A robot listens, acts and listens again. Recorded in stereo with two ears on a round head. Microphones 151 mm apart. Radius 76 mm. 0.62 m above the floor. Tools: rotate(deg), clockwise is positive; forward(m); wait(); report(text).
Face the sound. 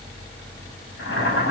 rotate(-90)
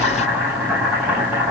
rotate(10)
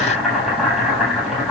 report("Facing the boiling.")